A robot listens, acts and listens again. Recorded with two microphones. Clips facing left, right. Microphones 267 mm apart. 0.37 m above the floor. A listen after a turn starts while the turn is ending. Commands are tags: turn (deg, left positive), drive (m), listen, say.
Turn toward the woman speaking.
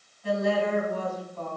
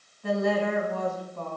<turn deg="-50"/>
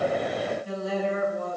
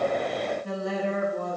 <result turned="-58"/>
<turn deg="-65"/>
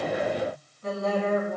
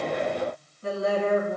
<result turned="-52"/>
<turn deg="-40"/>
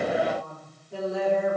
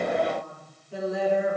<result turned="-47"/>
<say>Facing the woman speaking.</say>